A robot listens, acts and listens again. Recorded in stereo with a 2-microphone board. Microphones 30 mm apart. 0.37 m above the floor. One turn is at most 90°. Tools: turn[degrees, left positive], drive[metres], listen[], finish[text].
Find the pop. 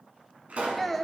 Thought: The pop: about 55° right or 125° right.
Action: turn[-55]
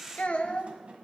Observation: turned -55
Action: listen[]
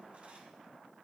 Action: finish[I heard a pop, but can't make it out now. It was about straight ahead or 70° right.]